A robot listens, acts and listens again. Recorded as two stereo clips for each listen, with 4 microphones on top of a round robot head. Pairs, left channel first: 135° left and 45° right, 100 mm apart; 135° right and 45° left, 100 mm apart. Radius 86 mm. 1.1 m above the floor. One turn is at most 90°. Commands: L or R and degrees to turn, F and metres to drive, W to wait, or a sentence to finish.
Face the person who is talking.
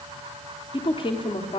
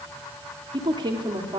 L90
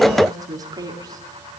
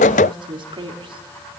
Found it: a woman speaking, straight ahead.